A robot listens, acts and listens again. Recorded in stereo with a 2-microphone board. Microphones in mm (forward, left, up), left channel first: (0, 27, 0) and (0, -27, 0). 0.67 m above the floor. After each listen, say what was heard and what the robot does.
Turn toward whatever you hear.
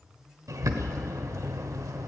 Turn 90° right.
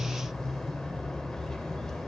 So it is at 10° left. Turn 10° left.
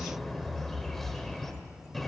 Facing the bird, 1 to 2 m away.